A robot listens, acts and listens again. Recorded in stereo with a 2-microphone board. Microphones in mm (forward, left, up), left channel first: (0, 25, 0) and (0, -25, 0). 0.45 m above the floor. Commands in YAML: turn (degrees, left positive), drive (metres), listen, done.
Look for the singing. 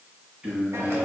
turn: -30
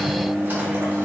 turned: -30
turn: 35
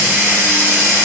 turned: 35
listen: true
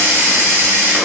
listen: true
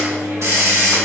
turn: 10
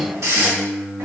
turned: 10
turn: 10
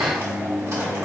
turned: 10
done: "Found it: singing, straight ahead, 2 to 4 m away."